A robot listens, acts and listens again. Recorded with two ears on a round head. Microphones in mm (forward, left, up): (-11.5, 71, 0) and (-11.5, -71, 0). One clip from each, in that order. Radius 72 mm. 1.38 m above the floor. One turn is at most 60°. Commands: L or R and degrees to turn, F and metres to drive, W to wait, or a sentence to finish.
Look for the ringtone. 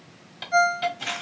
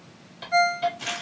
L30
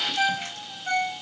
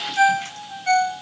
R35
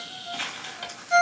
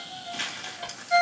Facing the ringtone.